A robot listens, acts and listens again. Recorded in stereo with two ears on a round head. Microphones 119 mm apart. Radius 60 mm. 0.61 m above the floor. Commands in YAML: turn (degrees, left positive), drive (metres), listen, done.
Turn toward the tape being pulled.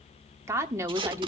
turn: -35
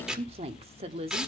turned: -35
done: "Facing the tape being pulled."